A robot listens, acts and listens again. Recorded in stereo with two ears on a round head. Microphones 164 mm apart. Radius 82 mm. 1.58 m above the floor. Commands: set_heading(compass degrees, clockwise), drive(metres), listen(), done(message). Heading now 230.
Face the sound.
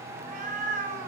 set_heading(275)
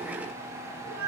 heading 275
set_heading(355)
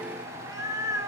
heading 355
set_heading(15)
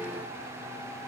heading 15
listen()
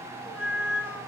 set_heading(25)
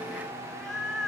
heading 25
done("Facing the cat meowing, 1 to 2 m away.")